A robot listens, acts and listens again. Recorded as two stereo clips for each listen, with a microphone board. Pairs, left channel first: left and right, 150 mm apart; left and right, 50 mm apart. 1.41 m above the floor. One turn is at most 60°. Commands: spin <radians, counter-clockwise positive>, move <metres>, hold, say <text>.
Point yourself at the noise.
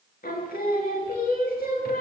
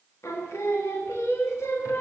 spin 1.05
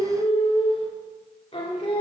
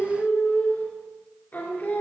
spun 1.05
spin 0.70
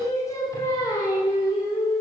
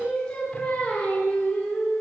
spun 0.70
spin 0.44
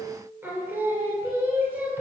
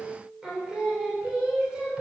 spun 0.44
spin -0.26
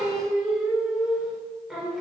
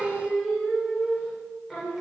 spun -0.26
say Facing the singing, 2 to 4 m away.